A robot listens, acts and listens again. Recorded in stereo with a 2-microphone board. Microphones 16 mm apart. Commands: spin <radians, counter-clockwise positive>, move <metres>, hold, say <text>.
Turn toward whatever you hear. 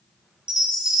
spin -0.87
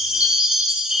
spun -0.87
spin -1.31
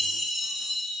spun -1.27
say Found it: a chime, straight ahead.